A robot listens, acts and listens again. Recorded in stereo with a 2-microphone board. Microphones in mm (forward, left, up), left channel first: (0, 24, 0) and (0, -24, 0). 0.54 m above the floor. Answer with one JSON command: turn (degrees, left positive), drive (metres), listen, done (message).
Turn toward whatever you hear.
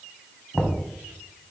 {"turn": 30}
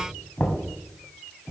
{"turn": 140}
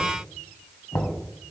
{"turn": 50}
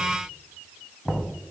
{"done": "Facing the knocking, 2 to 4 m away."}